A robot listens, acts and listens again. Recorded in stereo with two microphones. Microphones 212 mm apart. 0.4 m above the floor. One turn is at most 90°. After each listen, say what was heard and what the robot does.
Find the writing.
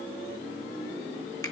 Keep listening.
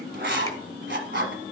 The writing: about 60° right or 120° right. Turn 60° right.
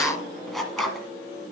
Facing the writing, 1 to 2 m away.